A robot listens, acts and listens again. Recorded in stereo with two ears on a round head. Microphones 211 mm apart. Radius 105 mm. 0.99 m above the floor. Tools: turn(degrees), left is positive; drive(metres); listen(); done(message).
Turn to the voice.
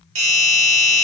listen()
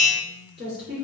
turn(degrees=-45)
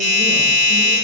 listen()
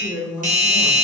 done("Facing the woman speaking.")